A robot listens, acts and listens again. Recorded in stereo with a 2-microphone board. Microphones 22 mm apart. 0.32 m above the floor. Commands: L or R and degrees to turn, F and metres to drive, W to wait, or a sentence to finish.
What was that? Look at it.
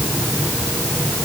W
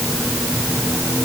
W
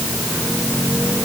I can't make out anything to turn to.